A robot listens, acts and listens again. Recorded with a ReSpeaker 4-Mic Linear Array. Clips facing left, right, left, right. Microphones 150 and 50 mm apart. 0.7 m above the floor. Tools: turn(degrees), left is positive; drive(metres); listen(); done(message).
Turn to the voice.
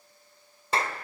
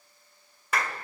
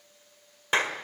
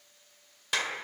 listen()
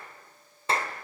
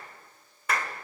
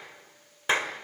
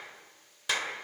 listen()
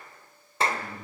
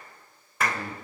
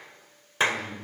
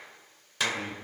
turn(degrees=-90)
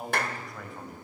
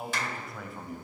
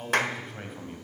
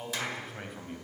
done("Facing the man speaking.")